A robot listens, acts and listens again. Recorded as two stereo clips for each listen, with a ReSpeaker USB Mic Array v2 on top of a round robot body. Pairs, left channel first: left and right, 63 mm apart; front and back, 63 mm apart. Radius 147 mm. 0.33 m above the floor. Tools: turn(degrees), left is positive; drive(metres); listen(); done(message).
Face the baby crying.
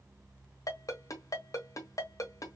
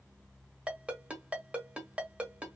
listen()
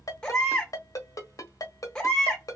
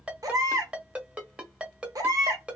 turn(degrees=165)
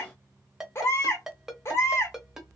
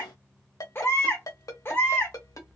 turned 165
turn(degrees=50)
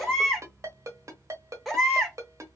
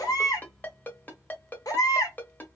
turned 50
done("Facing the baby crying.")